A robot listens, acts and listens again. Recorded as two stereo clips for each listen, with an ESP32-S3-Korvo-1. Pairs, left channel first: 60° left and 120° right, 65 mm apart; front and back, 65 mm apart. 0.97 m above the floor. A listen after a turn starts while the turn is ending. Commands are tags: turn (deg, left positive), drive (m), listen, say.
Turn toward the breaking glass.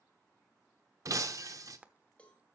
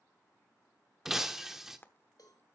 <turn deg="-95"/>
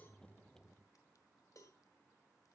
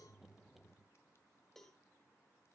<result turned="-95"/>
<say>I heard breaking glass from this way, but can't make it out now.</say>